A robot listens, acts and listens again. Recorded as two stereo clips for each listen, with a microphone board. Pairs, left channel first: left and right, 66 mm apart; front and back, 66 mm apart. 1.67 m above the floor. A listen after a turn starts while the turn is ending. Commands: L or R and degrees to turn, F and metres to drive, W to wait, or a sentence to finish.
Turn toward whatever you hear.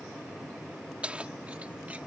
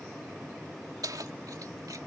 R160
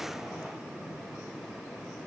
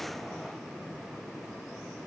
W
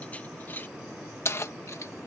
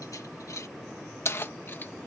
L45
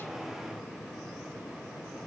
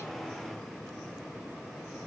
W
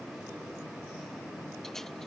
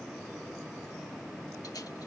W
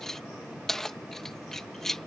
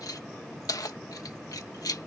Found it: keys jangling, straight ahead.